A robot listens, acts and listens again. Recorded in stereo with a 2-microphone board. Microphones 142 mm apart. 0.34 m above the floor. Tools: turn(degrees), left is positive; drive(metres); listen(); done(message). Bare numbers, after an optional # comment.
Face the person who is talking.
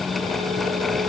listen()
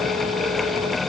listen()
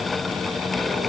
done("I can't make out anyone speaking to turn to.")